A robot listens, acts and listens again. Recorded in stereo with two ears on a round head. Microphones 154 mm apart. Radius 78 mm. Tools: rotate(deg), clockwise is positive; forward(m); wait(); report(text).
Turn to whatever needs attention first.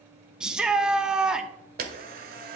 rotate(30)
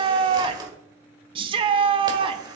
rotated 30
rotate(145)
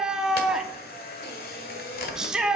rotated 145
report("Facing the shout.")